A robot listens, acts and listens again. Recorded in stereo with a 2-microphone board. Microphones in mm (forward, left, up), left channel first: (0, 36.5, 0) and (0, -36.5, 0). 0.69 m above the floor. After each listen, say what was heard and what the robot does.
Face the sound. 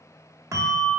The bell: about 45° right or 135° right. Turn 45° right.
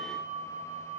Facing the bell.